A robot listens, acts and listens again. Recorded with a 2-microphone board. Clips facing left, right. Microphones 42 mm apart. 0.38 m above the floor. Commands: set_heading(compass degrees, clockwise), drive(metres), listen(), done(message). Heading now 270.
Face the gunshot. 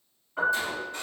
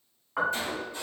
set_heading(315)
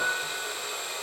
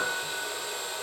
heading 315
listen()
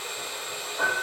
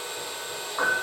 done("I heard a gunshot, but can't make it out now. It was about straight ahead or 90° right.")